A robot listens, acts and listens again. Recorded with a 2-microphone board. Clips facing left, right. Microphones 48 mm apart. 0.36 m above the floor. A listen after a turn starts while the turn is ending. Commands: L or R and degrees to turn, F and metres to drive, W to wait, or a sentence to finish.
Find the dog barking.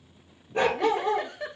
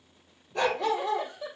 L25
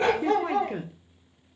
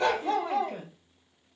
L130
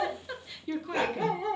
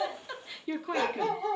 L25
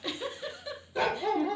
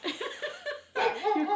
Found it: a dog barking, straight ahead, 2 to 4 m away.